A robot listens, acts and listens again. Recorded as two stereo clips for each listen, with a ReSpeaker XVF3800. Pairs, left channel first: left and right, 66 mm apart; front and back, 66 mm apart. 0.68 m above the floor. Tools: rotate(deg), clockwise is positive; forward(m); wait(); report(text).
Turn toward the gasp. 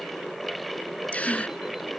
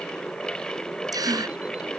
rotate(-160)
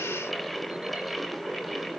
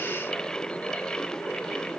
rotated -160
report("I heard a gasp from this way, but can't make it out now.")